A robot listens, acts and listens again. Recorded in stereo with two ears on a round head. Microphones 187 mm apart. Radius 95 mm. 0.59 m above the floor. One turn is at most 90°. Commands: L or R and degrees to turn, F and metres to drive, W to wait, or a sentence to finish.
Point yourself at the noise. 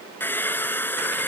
L30
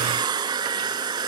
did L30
R20
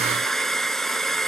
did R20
Found it: a hair dryer, straight ahead.